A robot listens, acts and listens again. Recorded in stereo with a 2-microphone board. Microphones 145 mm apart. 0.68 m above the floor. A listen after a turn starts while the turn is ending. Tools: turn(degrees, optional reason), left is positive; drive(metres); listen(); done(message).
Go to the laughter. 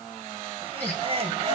turn(degrees=-40, reason="The laughter: about 40° right or 140° right.")
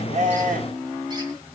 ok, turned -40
listen()
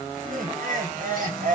turn(degrees=-95, reason="So it is at 95° right.")
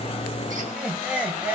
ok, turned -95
turn(degrees=-10, reason="The laughter is now 10° right.")
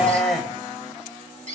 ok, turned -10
drive(metres=1.0)
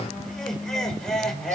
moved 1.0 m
drive(metres=1.0)
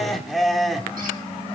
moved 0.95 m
drive(metres=1.0)
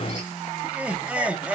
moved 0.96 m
turn(degrees=-10, reason="The laughter is now 10° right.")
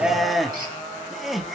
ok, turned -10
drive(metres=1.0)
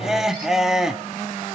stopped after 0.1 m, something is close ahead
done("I am next to the laughter.")